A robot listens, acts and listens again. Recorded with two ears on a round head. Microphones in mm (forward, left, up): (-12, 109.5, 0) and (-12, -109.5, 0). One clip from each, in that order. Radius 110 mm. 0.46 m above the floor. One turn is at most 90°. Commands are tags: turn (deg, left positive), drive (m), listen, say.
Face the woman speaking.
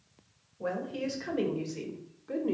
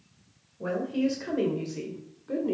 <turn deg="30"/>
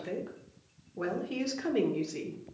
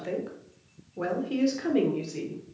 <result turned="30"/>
<turn deg="15"/>
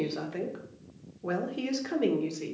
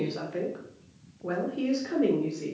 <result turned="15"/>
<turn deg="40"/>
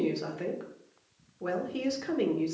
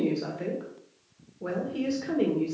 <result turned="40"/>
<turn deg="25"/>
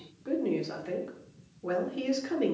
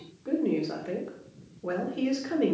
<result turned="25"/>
<turn deg="10"/>
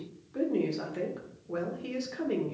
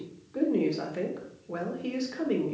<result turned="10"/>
<say>Found it: a woman speaking, straight ahead, 1 to 2 m away.</say>